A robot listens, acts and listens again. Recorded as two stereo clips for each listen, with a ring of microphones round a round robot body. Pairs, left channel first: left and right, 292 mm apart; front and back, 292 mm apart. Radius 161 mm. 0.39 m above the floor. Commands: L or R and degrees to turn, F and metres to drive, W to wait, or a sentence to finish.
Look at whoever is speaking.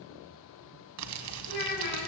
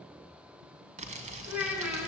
L95
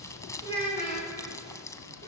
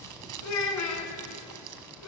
L15
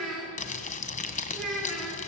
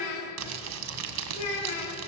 Facing the child speaking.